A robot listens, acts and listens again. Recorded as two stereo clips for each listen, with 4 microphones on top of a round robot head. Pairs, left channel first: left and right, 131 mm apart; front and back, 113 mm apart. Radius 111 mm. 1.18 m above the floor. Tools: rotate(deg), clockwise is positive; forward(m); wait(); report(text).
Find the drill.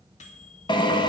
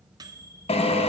rotate(-35)
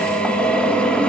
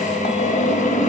report("Facing the drill.")